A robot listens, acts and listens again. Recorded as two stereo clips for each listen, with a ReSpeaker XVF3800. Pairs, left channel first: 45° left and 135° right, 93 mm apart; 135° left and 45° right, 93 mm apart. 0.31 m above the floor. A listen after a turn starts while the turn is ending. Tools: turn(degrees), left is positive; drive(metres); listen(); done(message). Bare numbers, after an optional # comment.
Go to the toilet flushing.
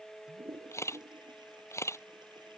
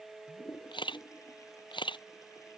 # The toilet flushing: 170° right.
turn(-170)
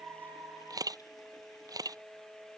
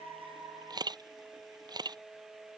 listen()
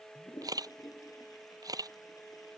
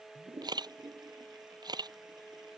drive(1.0)
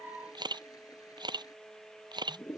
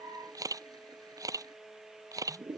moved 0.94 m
drive(1.0)
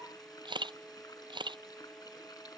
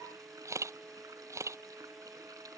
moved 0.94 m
drive(1.0)
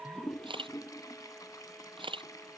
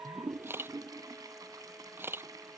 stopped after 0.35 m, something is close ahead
done("Arrived at the toilet flushing, straight ahead.")